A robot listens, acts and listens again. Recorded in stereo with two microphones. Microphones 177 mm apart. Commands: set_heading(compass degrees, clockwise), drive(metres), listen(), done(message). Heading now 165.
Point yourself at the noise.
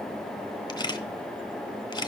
set_heading(140)
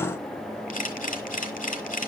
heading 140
set_heading(10)
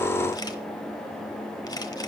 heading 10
listen()
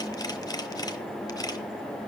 set_heading(350)
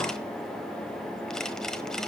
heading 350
listen()
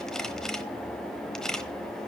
done("Facing the camera shutter.")